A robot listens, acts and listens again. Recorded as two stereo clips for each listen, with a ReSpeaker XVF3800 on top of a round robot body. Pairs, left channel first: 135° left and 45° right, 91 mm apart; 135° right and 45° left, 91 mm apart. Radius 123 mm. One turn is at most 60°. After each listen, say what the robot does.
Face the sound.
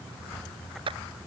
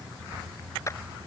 Turn 60° right.
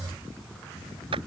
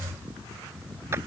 Turn 20° right.
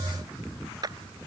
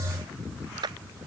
Facing the clap.